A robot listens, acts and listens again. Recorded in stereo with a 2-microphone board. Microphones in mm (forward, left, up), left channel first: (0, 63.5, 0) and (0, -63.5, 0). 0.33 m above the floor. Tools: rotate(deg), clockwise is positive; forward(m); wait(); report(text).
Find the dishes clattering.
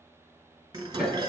rotate(35)
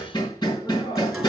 report("Facing the dishes clattering.")